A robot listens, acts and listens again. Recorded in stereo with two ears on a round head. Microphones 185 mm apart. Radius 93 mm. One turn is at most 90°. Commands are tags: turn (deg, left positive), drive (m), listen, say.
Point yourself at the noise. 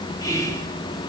<turn deg="15"/>
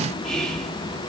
<say>Found it: whispering, straight ahead, 2 to 4 m away.</say>